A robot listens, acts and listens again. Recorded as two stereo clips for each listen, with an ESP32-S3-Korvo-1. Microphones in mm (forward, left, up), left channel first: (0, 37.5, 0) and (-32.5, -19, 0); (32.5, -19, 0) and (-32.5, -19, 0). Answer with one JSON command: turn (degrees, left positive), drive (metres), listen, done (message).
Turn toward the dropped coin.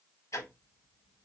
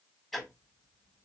{"listen": true}
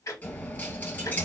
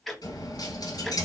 {"done": "Facing the dropped coin, 1 to 2 m away."}